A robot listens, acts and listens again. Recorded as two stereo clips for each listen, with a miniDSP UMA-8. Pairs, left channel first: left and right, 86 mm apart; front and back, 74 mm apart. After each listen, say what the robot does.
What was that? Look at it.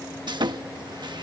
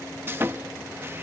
Turn 120° right.
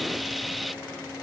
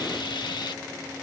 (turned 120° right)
Facing the sawing.